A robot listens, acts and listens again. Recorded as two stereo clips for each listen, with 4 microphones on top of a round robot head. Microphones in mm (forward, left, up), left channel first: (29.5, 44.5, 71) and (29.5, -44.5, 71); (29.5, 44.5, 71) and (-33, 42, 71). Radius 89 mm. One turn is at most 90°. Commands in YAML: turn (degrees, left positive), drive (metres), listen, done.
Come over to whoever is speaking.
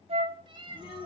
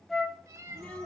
turn: 75
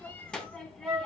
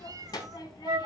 turn: 10
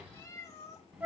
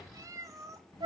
drive: 1.0
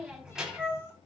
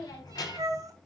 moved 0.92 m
turn: -10
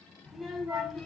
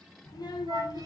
drive: 1.0
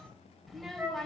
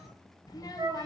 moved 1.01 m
drive: 1.0
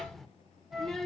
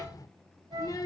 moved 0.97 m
drive: 1.0
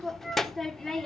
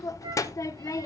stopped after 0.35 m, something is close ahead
done: "I am next to the child speaking."